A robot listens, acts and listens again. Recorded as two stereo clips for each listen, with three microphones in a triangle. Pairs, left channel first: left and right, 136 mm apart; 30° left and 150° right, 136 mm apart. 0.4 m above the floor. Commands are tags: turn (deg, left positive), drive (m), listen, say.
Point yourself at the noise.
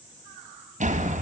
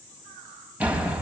<turn deg="-70"/>
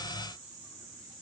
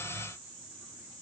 <say>I heard a door slam from this way, but can't make it out now.</say>